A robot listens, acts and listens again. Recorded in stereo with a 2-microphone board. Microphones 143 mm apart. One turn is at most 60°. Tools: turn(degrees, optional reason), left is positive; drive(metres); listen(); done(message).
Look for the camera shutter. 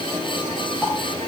listen()
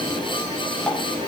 listen()
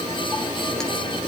done("I can't make out a camera shutter to turn to.")